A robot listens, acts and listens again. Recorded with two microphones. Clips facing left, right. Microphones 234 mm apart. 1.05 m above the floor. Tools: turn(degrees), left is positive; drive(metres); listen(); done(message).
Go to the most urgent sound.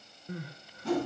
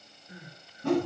turn(degrees=90)
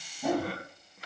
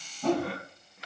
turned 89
drive(metres=1.0)
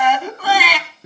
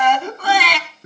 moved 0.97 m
drive(metres=1.0)
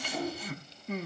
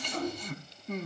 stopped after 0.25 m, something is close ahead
done("Arrived at the crying, straight ahead.")